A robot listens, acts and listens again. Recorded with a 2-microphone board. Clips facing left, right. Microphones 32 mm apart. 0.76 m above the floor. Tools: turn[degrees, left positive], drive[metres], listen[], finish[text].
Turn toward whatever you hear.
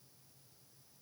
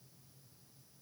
Action: listen[]
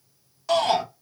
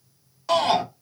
Action: turn[-30]
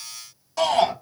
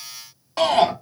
Thought: So it is at 145° right.
Action: turn[-145]
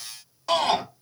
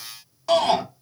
Action: finish[Facing the shout.]